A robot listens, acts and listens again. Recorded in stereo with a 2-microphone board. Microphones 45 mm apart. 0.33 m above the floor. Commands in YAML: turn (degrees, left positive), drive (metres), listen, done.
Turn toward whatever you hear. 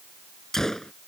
turn: 30
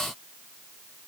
listen: true
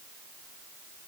done: "I heard a gunshot, but can't make it out now. It was about 20° right or 140° left."